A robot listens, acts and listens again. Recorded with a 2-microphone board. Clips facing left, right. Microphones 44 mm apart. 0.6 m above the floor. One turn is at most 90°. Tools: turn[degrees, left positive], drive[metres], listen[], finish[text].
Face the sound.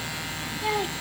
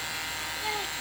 Thought: The child speaking: about 20° left or 160° left.
Action: turn[20]
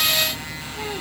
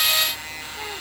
Action: listen[]
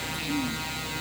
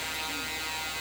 Action: listen[]
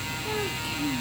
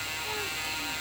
Action: turn[30]
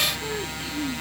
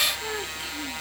Thought: So it is at 10° right.
Action: turn[-10]
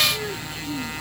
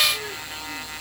Action: finish[Facing the child speaking.]